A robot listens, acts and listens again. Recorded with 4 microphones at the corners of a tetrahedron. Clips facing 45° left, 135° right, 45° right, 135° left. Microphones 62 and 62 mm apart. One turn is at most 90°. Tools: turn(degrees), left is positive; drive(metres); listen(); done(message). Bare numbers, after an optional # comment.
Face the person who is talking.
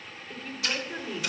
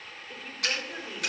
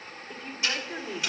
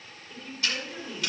# The woman speaking: 55° right.
turn(-55)
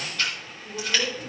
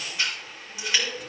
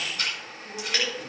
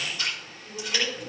done("Found it: a woman speaking, straight ahead, 2 to 4 m away.")